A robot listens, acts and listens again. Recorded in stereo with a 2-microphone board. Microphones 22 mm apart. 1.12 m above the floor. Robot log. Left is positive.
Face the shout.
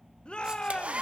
note: The shout: about 55° left or 125° left.
cmd yaw +55
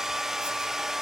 cmd idle
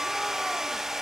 cmd idle
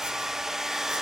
end: I heard a shout, but can't make it out now. It was about straight ahead or 70° left.